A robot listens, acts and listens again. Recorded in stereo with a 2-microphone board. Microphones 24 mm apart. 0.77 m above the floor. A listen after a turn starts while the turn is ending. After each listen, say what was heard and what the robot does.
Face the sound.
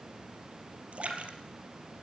The splash: about 65° right or 115° right. Turn 65° right.
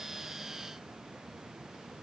Keep listening.
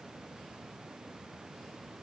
I heard a splash, but can't make it out now. It was about straight ahead or 50° right.